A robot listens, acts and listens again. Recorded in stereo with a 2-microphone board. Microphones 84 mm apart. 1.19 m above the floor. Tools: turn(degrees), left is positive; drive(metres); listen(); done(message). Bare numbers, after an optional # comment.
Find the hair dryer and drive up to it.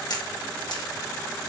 listen()
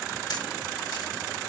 listen()
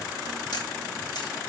done("I can't make out a hair dryer, only a camera shutter.")